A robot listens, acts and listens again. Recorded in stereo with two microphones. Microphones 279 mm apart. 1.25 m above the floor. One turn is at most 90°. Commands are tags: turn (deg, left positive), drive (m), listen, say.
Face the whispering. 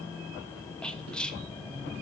<turn deg="30"/>
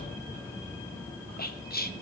<turn deg="90"/>
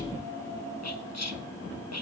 <turn deg="70"/>
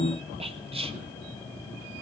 <turn deg="-20"/>
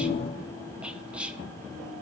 <say>Facing the whispering, under 1 m away.</say>